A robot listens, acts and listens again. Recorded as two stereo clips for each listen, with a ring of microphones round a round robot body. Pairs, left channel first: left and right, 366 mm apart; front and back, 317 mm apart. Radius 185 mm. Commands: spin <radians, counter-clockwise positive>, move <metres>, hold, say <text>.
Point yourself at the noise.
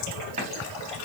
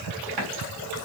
spin -2.88
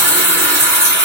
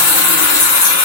say Found it: a running tap, straight ahead.